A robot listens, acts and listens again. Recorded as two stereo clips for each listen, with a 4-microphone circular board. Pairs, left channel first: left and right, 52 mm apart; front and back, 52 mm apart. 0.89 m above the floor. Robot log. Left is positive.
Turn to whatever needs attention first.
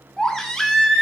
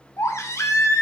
note: The baby crying: 10° left.
cmd yaw +10
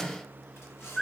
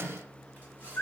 end: Facing the baby crying, under 1 m away.